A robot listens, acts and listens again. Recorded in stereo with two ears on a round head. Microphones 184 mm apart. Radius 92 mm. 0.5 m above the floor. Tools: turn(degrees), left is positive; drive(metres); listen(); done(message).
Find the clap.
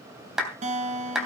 turn(degrees=-30)
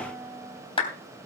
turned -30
turn(degrees=25)
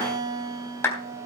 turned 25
turn(degrees=15)
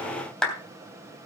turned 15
done("Facing the clap, 2 to 4 m away.")